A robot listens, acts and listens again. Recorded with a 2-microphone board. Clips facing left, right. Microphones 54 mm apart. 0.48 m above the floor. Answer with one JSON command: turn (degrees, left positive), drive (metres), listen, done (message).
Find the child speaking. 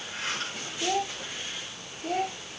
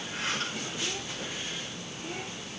{"turn": 65}
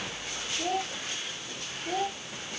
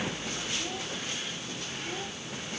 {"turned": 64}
{"turn": 50}
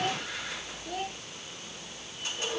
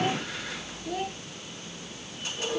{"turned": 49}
{"done": "Facing the child speaking."}